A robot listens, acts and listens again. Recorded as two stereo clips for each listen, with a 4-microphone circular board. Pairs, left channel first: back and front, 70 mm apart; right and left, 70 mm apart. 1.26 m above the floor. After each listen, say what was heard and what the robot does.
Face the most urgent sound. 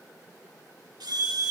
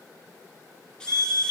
The alarm: 35° left. Turn 35° left.
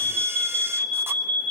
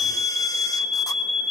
Facing the alarm, over 4 m away.